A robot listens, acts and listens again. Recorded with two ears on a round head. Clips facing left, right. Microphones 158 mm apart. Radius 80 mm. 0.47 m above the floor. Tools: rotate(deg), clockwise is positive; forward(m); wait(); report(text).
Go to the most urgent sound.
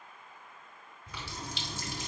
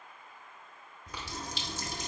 wait()
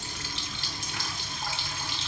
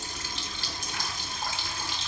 wait()
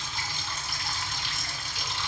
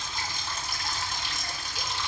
report("I can't make out anything urgent to turn to.")